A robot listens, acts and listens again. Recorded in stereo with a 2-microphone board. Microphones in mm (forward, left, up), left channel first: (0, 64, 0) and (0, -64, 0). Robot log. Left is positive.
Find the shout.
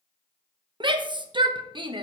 note: The shout: about 40° right or 140° right.
cmd yaw -40
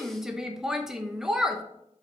end: Found it: a shout, straight ahead.